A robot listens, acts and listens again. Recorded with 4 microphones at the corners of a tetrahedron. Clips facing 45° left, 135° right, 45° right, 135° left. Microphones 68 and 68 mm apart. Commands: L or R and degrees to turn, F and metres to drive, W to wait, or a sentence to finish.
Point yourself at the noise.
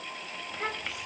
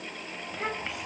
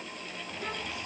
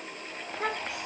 L135
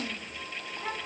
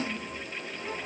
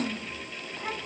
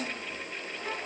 L10
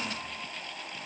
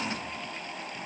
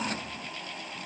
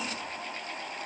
W
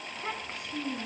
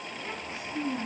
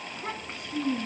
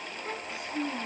Found it: a child speaking, straight ahead.